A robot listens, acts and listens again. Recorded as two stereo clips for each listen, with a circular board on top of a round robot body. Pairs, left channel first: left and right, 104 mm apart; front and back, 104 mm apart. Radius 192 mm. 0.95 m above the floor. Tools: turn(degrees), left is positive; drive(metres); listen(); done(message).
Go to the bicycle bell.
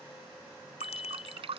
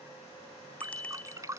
turn(degrees=75)
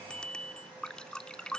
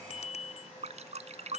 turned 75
turn(degrees=10)
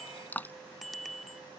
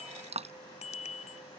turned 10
drive(metres=1.0)
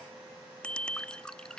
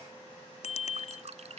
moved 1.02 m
turn(degrees=10)
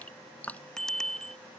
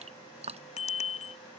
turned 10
drive(metres=1.0)
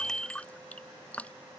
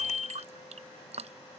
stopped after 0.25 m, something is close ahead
done("Arrived at the bicycle bell, straight ahead.")